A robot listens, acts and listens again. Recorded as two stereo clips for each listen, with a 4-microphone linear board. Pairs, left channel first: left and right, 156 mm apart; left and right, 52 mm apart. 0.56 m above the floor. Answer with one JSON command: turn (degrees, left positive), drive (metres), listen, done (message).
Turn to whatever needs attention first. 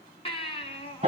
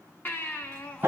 {"turn": 35}
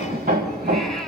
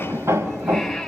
{"listen": true}
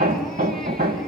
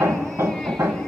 {"listen": true}
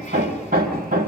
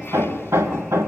{"done": "I heard a baby crying, but can't make it out now. It was about straight ahead or 110° left."}